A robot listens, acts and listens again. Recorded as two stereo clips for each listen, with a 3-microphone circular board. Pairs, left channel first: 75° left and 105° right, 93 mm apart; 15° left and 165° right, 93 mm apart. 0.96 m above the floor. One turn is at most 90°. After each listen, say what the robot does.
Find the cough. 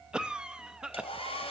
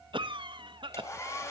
Turn 90° left.
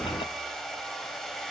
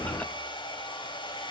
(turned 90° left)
Turn 85° left.
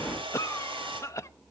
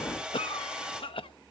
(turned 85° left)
Turn 20° left.
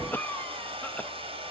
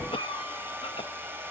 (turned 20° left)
Facing the cough.